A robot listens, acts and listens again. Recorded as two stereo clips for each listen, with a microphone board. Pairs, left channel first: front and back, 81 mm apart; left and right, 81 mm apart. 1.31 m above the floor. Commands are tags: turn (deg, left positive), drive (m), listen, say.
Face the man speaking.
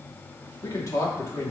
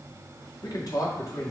<turn deg="50"/>
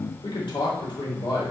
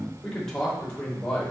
<turn deg="10"/>
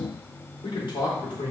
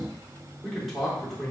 <say>Facing the man speaking, 2 to 4 m away.</say>